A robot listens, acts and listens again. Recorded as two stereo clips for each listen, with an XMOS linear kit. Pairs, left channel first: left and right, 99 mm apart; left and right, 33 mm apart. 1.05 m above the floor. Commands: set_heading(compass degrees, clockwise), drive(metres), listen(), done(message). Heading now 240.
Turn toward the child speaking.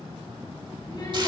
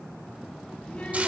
set_heading(195)
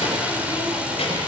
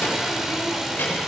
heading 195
set_heading(95)
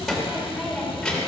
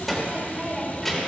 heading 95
done("Facing the child speaking, 2 to 4 m away.")